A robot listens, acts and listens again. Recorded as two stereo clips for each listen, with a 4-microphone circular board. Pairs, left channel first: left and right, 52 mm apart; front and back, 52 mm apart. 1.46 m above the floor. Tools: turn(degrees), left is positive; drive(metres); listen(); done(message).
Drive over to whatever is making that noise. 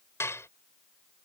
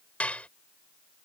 turn(degrees=65)
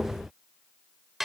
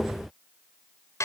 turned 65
drive(metres=1.0)
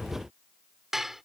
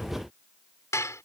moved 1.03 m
drive(metres=1.0)
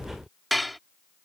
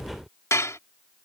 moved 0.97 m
drive(metres=1.0)
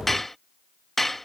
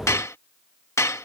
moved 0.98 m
drive(metres=1.0)
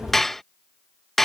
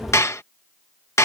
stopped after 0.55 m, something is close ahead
done("I am next to the dishes clattering.")